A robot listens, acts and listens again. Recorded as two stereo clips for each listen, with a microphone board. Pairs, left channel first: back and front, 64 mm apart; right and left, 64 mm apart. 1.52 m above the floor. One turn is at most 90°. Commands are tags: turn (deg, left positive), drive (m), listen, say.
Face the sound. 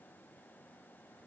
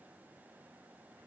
<listen/>
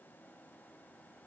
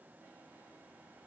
<listen/>
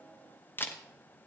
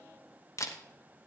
<turn deg="-90"/>
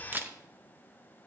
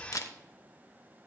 <turn deg="-60"/>
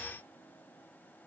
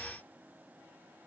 <listen/>
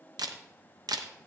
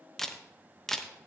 <say>Found it: a camera shutter, straight ahead.</say>